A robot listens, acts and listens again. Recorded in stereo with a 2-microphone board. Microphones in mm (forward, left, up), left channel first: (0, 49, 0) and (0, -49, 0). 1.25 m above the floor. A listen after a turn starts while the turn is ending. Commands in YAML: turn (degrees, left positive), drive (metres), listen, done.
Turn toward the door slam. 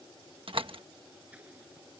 turn: -65
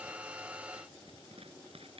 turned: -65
listen: true
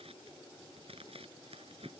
done: "I heard a door slam, but can't make it out now. It was about straight ahead or 50° right."